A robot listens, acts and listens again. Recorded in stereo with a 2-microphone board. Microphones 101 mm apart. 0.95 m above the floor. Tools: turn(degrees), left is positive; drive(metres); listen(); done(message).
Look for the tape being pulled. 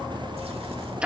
listen()
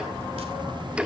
listen()
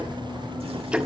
done("I can't make out tape being pulled to turn to.")